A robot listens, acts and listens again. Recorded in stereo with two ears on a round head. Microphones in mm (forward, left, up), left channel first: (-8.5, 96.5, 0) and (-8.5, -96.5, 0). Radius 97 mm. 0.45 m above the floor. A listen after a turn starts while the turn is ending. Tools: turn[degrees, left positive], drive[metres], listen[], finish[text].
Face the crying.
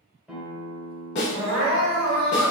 Thought: The crying: about 65° right or 115° right.
Action: turn[-65]
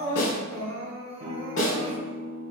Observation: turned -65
Thought: So it is at 20° right.
Action: turn[-20]
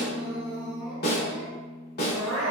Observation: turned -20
Action: finish[Facing the crying, 1 to 2 m away.]